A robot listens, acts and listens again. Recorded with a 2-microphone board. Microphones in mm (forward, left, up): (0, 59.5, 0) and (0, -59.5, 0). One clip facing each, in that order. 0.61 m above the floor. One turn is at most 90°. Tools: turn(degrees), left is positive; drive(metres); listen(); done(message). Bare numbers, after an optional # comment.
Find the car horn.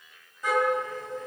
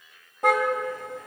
# The car horn: about 65° right or 115° right.
turn(-65)
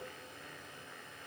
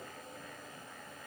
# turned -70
listen()
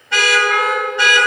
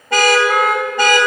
# So it is at 45° right.
turn(-45)
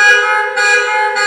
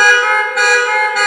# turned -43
done("Facing the car horn, 2 to 4 m away.")